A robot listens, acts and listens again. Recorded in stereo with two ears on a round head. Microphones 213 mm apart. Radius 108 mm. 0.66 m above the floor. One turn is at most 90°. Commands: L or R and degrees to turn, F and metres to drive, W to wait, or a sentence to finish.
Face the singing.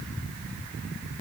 W
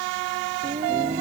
R25
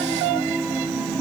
Found it: singing, straight ahead.